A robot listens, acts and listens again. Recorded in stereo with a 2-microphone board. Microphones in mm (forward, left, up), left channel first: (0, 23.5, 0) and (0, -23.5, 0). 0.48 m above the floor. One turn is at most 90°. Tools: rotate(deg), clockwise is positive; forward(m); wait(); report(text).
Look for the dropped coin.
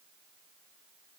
wait()
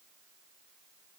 wait()
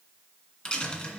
rotate(-15)
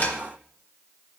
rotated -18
rotate(-90)
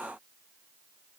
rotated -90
rotate(-55)
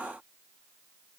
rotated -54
report("Facing where the dropped coin came from. I can't hear it now.")